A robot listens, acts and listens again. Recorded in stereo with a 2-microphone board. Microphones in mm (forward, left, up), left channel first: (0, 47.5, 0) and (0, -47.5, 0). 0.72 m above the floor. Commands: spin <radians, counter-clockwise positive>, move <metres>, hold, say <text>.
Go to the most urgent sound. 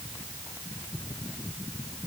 hold
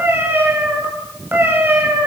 hold
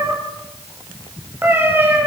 say I can't make out anything urgent to turn to.